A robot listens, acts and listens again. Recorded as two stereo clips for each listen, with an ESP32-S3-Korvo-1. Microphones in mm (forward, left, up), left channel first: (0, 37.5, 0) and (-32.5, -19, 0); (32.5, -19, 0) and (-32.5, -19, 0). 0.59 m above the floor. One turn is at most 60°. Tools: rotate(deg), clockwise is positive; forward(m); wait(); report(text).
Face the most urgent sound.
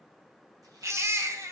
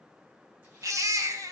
rotate(60)
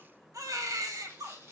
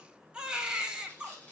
rotate(60)
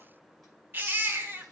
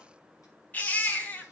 rotate(60)
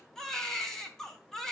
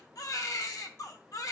rotate(20)
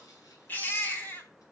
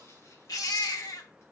report("Facing the baby crying.")